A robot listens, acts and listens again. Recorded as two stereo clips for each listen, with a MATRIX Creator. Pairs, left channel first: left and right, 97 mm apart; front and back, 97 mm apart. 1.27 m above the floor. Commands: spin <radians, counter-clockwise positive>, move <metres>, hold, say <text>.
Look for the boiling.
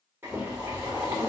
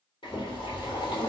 spin -0.44
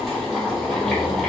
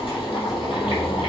say Facing the boiling, 2 to 4 m away.